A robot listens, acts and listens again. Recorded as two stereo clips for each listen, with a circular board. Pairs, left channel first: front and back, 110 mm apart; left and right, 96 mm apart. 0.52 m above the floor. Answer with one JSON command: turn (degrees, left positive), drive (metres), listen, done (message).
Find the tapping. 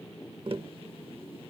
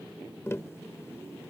{"turn": 150}
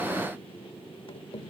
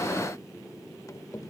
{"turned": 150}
{"turn": 35}
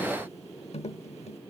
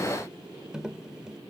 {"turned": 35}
{"turn": -10}
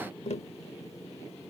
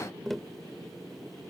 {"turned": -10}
{"done": "Found it: tapping, straight ahead."}